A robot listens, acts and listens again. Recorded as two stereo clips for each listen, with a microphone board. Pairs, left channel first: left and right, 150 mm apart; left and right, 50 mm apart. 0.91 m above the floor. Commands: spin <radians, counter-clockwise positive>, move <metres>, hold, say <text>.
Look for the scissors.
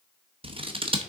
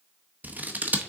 spin -0.61
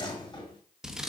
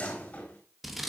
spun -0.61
say Facing the scissors.